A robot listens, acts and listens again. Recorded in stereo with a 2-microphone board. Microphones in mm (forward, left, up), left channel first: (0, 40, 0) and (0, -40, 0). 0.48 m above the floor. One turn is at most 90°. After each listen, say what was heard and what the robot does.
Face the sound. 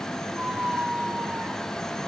The squeak: about 20° right or 160° right. Turn 20° right.
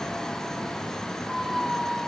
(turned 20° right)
Facing the squeak.